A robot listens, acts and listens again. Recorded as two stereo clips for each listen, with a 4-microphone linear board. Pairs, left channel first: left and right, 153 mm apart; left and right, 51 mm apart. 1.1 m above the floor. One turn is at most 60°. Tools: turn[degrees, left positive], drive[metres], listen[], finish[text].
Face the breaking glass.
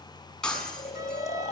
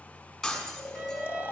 Action: turn[30]
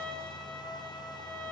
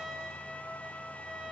Action: listen[]
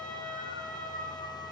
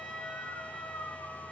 Action: finish[I heard breaking glass, but can't make it out now. It was about 25° right or 145° left.]